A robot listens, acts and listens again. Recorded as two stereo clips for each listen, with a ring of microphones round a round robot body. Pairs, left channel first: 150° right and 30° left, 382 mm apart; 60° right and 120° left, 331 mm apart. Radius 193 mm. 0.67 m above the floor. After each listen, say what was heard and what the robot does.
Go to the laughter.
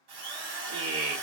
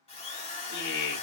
The laughter: 25° right. Turn 25° right.
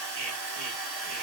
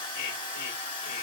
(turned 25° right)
Keep listening.
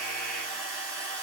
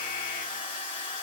Keep listening.
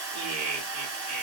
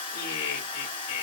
The laughter is now 20° right. Turn 20° right.
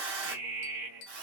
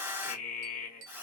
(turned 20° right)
Drive 1.0 m forward.
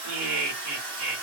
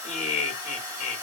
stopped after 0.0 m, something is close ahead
Something is in my way. I am facing the laughter but have not reached it.